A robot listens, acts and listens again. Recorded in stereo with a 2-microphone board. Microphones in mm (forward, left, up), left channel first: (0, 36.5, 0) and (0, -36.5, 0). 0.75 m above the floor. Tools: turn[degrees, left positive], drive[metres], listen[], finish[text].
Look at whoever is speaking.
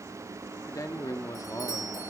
Thought: The man speaking: about 50° left or 130° left.
Action: turn[50]
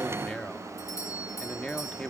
Thought: So it is at 15° left.
Action: turn[15]
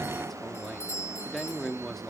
Action: finish[Found it: a man speaking, straight ahead.]